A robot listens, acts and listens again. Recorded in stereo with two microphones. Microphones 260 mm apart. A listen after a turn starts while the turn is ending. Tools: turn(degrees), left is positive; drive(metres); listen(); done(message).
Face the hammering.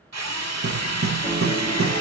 turn(degrees=-55)
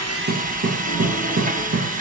turn(degrees=-65)
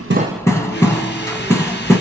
turn(degrees=10)
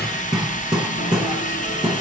done("Found it: hammering, straight ahead.")